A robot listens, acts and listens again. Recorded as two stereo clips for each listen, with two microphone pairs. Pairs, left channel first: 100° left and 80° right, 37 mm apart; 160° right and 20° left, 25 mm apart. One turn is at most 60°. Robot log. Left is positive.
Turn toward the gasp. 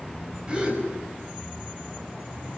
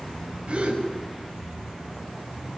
note: The gasp: 20° right.
cmd yaw -20
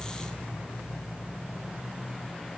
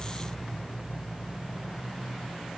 end: I heard a gasp from this way, but can't make it out now.